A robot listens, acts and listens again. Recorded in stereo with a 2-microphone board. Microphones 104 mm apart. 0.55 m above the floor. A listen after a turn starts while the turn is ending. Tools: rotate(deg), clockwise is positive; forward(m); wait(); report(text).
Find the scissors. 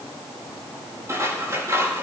rotate(30)
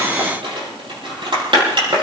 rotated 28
rotate(120)
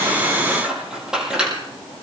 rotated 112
rotate(10)
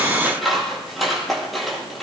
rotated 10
report("Facing the scissors.")